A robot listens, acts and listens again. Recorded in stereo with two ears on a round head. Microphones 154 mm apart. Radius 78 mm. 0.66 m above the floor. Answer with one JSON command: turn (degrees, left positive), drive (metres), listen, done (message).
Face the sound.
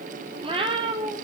{"turn": -30}
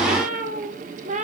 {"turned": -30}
{"turn": -135}
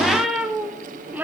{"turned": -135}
{"turn": -10}
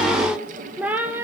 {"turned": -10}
{"turn": -10}
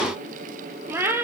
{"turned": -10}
{"turn": -10}
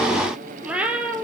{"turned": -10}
{"done": "Found it: a cat meowing, straight ahead, 2 to 4 m away."}